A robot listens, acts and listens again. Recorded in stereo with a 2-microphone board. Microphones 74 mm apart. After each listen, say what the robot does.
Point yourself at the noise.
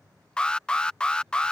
Turn 30° left.
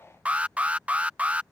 Turn 15° right.
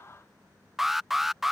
Facing the alarm.